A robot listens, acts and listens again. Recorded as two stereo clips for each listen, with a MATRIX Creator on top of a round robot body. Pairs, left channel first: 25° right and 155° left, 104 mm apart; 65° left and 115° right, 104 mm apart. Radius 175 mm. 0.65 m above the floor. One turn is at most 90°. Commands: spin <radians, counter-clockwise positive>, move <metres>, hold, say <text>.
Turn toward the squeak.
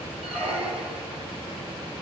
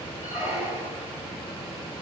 spin 1.57
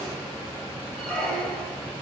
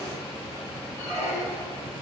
spin 1.05
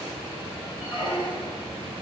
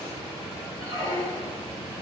spin 0.17
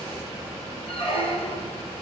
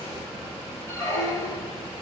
say Facing the squeak.